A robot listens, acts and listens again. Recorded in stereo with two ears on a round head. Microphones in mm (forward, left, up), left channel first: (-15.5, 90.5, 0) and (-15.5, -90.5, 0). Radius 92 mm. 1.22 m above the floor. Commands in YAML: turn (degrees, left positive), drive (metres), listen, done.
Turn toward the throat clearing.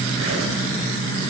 listen: true
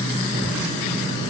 listen: true
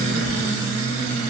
done: "I can't make out throat clearing."